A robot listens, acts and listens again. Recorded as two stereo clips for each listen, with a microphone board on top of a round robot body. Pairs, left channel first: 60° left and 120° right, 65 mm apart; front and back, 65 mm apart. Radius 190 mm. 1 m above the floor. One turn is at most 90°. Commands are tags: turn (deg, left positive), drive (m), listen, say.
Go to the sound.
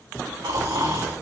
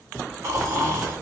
<turn deg="-90"/>
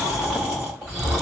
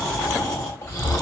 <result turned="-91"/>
<turn deg="-35"/>
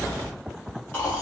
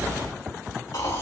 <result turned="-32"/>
<drive m="1.0"/>
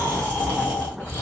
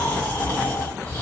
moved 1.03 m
<drive m="1.0"/>
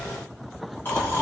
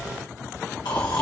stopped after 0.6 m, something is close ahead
<say>I am next to the snoring.</say>